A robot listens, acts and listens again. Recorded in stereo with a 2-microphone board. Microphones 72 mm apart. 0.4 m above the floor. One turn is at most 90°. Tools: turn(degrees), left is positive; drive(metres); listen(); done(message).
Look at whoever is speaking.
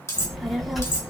turn(degrees=30)
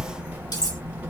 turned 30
turn(degrees=-30)
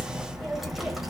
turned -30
done("Facing the child speaking.")